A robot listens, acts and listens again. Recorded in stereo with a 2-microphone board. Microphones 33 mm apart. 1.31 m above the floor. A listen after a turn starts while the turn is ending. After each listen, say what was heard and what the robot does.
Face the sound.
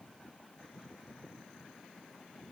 Keep listening.
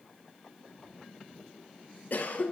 The cough: about 55° left or 125° left. Turn 55° left.
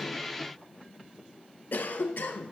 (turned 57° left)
So it is at 65° left. Turn 65° left.
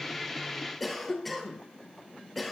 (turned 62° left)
Facing the cough, under 1 m away.